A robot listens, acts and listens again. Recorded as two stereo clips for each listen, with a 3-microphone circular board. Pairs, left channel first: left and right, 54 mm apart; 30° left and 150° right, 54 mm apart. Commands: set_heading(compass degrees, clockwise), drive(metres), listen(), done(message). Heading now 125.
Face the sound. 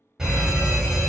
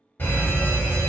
set_heading(140)
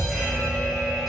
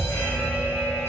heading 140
done("Found it: a fire alarm, straight ahead.")